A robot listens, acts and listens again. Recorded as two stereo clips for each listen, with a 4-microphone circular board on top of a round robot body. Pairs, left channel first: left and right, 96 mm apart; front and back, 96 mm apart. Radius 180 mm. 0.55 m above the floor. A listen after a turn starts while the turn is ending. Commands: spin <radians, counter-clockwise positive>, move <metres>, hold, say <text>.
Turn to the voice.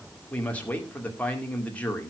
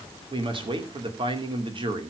spin 2.88
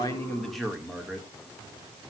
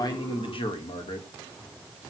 say Found it: a man speaking, straight ahead.